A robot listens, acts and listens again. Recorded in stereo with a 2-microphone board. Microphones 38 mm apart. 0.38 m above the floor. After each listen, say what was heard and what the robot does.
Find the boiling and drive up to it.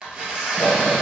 The boiling: about 50° right or 130° right. Turn 50° right.
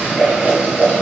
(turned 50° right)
So it is at 75° right. Turn 75° right.
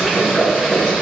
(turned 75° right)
Drive 1.0 m forward.
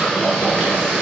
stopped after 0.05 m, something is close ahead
The boiling is now 10° right. Turn 10° right.
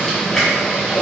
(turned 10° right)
Something is in my way. I am facing the boiling but have not reached it.